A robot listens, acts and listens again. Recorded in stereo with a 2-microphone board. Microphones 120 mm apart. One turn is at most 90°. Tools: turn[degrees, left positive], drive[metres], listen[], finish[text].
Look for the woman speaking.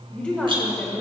Action: turn[30]
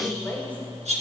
Action: turn[30]
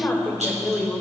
Action: turn[30]
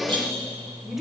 Action: turn[-30]
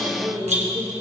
Thought: So it is at 140° right.
Action: turn[-90]
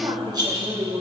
Thought: The woman speaking is now 45° right.
Action: turn[-45]
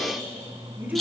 Thought: The woman speaking is now 15° right.
Action: turn[-15]
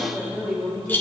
Action: finish[Found it: a woman speaking, straight ahead.]